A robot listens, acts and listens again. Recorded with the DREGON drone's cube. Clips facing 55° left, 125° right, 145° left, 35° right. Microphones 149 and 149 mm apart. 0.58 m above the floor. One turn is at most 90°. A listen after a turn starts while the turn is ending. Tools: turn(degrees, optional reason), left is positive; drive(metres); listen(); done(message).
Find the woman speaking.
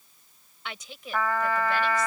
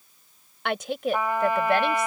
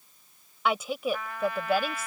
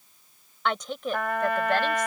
turn(degrees=-90, reason="The woman speaking: 130° right.")
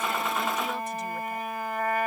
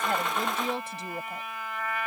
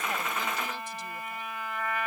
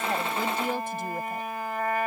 turn(degrees=-65, reason="The woman speaking is now 65° right.")
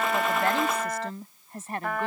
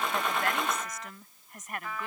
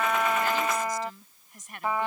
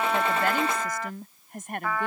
done("Found it: a woman speaking, straight ahead.")